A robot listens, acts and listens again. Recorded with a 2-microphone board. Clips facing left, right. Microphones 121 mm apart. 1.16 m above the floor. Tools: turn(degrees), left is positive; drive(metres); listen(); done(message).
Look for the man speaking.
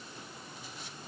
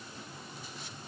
listen()
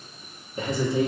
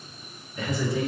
turn(degrees=25)
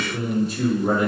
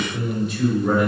turn(degrees=35)
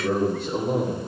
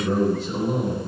turn(degrees=120)
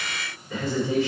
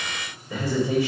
turn(degrees=-15)
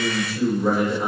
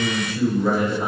done("Facing the man speaking, 2 to 4 m away.")